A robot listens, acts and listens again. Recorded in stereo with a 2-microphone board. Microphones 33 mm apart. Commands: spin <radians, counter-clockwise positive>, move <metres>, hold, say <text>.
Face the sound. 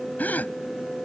spin 0.96
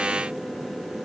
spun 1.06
hold
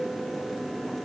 say I heard a gasp, but can't make it out now. It was about 5° right or 65° left.